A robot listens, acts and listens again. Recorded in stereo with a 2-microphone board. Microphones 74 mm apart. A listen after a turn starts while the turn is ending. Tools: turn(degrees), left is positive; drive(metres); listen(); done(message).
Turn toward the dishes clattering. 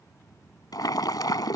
listen()
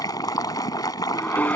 turn(degrees=25)
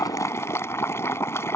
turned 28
listen()
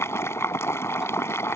listen()
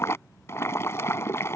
done("I heard dishes clattering, but can't make it out now. It was about 5° right or 130° left.")